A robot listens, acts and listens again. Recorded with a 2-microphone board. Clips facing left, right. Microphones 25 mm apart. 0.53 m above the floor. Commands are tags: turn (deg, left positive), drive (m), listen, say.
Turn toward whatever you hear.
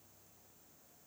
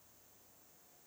<listen/>
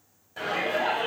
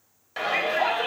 <turn deg="-70"/>
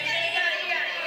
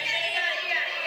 <turn deg="-20"/>
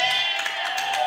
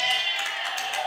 <say>Facing the shout.</say>